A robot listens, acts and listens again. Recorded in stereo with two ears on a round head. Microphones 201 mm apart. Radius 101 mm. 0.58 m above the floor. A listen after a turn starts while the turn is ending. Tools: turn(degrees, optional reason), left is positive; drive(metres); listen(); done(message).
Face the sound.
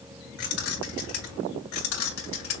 turn(degrees=60, reason="The keys jangling: about 60° left or 120° left.")
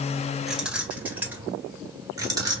turn(degrees=-20, reason="So it is at 20° right.")
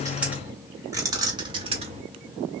turn(degrees=-30, reason="The keys jangling is now 30° right.")
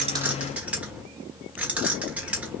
done("Facing the keys jangling, 1 to 2 m away.")